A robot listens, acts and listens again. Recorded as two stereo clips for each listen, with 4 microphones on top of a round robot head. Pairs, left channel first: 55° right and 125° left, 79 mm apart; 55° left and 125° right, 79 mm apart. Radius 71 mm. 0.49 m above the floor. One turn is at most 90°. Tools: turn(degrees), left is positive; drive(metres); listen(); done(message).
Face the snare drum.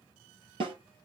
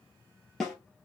turn(degrees=90)
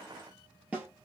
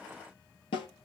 turn(degrees=50)
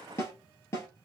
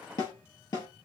done("Facing the snare drum, 1 to 2 m away.")